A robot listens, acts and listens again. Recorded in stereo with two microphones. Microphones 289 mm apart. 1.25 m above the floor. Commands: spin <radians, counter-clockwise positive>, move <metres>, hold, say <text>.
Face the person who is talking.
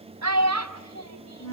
spin -1.57
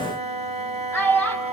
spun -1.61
say Found it: a child speaking, straight ahead.